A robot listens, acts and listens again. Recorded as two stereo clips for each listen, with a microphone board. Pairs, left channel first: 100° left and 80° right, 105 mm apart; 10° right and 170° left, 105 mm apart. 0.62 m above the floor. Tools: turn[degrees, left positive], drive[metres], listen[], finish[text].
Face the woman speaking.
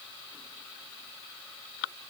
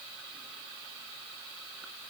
Action: listen[]
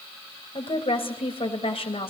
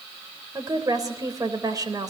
Thought: The woman speaking: 120° left.
Action: turn[120]
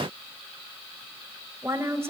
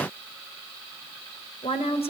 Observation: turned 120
Thought: The woman speaking is now 15° right.
Action: turn[-15]
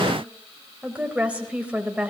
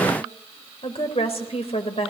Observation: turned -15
Action: finish[Facing the woman speaking.]